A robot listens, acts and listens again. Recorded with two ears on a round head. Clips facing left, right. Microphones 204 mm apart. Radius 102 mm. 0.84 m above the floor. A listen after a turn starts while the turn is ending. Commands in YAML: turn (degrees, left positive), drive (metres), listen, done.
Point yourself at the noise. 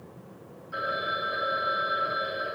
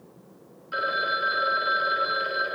turn: -90
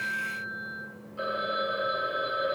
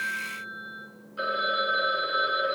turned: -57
turn: -20
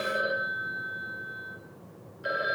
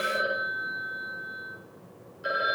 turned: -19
done: "Found it: a phone ringing, straight ahead, 2 to 4 m away."